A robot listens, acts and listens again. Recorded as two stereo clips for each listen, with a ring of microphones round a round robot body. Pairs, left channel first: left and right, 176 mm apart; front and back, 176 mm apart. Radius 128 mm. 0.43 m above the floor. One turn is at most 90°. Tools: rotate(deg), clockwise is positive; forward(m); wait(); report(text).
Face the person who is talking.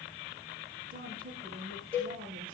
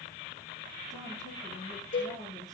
rotate(50)
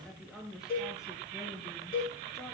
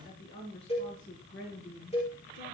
report("Found it: a woman speaking, straight ahead, over 4 m away.")